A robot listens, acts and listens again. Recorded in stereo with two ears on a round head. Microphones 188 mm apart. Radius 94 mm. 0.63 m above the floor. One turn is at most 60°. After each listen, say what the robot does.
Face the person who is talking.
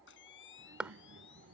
Turn 60° right.
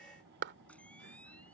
Turn 55° right.
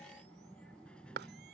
Facing the child speaking.